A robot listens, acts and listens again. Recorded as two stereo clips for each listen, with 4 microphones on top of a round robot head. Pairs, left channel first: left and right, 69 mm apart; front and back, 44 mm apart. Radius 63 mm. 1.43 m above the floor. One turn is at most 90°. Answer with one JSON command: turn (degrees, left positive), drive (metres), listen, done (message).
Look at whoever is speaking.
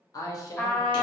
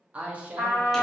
{"turn": 90}
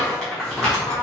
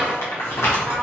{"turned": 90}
{"turn": 30}
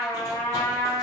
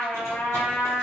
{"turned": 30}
{"listen": true}
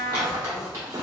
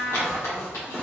{"done": "I heard a woman speaking from this way, but can't make it out now."}